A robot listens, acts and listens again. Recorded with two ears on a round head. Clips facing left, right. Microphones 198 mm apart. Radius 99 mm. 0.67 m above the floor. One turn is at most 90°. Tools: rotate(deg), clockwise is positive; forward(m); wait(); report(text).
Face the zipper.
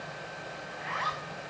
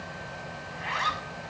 rotate(45)
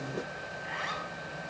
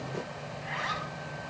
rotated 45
report("Facing the zipper, over 4 m away.")